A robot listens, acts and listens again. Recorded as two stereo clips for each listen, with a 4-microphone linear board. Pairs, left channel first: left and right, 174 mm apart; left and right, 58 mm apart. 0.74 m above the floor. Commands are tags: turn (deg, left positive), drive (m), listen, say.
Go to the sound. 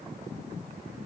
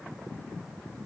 <listen/>
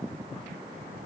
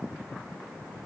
<listen/>
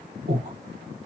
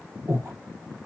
<turn deg="-65"/>
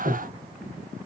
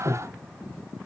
<drive m="1.0"/>
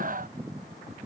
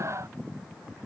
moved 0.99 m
<listen/>
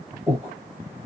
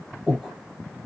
<drive m="1.0"/>
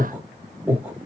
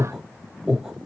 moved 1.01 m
<turn deg="-10"/>
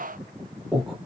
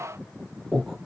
<drive m="1.0"/>
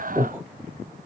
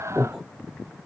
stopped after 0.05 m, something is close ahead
<turn deg="-10"/>
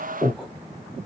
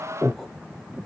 <say>Arrived at the breathing, straight ahead.</say>